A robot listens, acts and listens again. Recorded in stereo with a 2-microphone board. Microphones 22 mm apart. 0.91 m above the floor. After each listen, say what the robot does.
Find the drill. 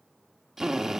Turn 15° right.
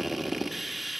Facing the drill.